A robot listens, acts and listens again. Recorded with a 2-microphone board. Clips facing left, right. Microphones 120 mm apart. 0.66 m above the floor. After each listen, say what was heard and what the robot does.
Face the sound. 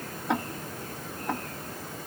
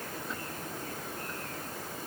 The ticking: about 70° left or 110° left. Turn 70° left.
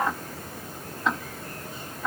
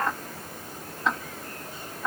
Found it: ticking, straight ahead.